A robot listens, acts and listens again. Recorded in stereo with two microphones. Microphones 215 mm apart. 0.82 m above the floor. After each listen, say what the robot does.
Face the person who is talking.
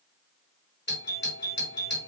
Keep listening.
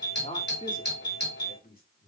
Turn 45° left.
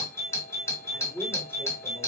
Turn 10° left.
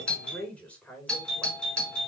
Found it: a man speaking, straight ahead, over 4 m away.